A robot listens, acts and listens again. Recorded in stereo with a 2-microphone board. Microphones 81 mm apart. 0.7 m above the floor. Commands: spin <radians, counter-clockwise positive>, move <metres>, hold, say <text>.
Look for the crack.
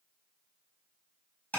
hold
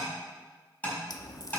spin 0.87
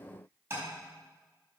hold
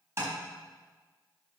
say I heard a crack, but can't make it out now. It was about straight ahead or 80° left.